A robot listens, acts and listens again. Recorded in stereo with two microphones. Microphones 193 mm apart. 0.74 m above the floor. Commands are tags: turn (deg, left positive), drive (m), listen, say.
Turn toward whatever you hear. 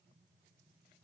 <listen/>
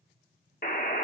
<turn deg="50"/>
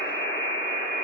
<turn deg="75"/>
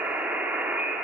<turn deg="-10"/>
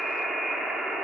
<say>Found it: a buzzer, straight ahead.</say>